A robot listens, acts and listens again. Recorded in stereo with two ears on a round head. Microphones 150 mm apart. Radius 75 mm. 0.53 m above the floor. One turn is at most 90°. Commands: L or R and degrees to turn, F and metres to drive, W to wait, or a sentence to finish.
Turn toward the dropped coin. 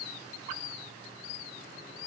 W
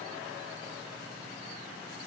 W
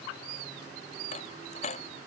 L40
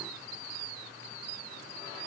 W
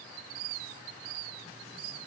I heard a dropped coin, but can't make it out now. It was about straight ahead or 100° left.